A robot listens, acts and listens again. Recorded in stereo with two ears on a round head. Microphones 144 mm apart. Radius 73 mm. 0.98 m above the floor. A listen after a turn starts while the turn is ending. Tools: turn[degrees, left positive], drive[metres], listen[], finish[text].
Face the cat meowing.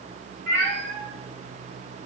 Thought: The cat meowing: about 75° right or 105° right.
Action: turn[-75]
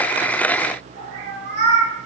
Thought: So it is at 45° right.
Action: turn[-45]
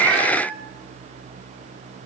Thought: The cat meowing is now 10° right.
Action: turn[-10]
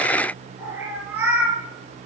Thought: The cat meowing is now 10° right.
Action: turn[-10]
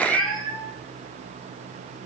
Action: finish[Found it: a cat meowing, straight ahead, over 4 m away.]